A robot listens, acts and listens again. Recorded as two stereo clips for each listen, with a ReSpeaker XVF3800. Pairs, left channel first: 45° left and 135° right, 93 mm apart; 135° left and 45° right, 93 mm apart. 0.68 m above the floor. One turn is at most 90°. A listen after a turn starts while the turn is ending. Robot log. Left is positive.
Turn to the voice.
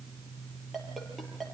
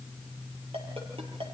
cmd idle
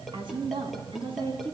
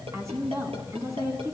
note: The woman speaking: 105° right.
cmd yaw -90
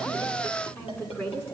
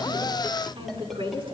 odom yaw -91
note: The woman speaking is now 20° right.
cmd yaw -20
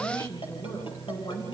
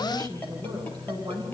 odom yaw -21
end: Found it: a woman speaking, straight ahead.